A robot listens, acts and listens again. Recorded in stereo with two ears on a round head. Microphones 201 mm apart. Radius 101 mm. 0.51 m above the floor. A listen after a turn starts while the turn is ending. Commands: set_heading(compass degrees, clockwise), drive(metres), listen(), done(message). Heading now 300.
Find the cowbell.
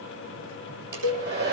set_heading(10)
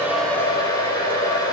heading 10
listen()
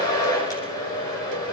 listen()
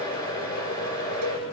done("I heard a cowbell, but can't make it out now. It was about straight ahead or 40° right.")